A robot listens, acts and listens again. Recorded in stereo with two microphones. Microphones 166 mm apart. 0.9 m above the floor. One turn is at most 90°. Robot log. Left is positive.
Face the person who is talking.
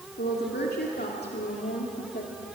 note: The woman speaking: about 70° left or 110° left.
cmd yaw +70
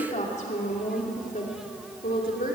note: So it is at 60° left.
cmd yaw +60
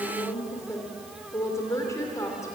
note: The woman speaking is now 20° left.
cmd yaw +20
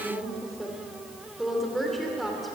end: Found it: a woman speaking, straight ahead, 2 to 4 m away.